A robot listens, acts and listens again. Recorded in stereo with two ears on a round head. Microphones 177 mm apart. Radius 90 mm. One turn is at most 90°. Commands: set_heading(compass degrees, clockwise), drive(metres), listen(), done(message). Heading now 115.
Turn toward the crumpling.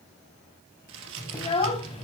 set_heading(185)
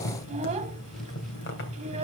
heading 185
listen()
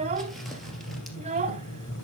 listen()
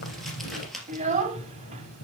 done("Found it: crumpling, straight ahead.")